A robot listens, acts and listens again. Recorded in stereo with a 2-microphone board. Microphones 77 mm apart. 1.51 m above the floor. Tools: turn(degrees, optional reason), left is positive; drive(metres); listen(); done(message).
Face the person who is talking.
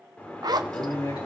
turn(degrees=60, reason="The man speaking: about 60° left or 120° left.")
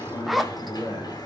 turn(degrees=70, reason="So it is at 70° left.")
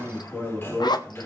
turn(degrees=15, reason="The man speaking is now 15° left.")
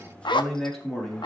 turn(degrees=10, reason="The man speaking is now 10° left.")
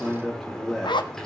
done("Facing the man speaking, over 4 m away.")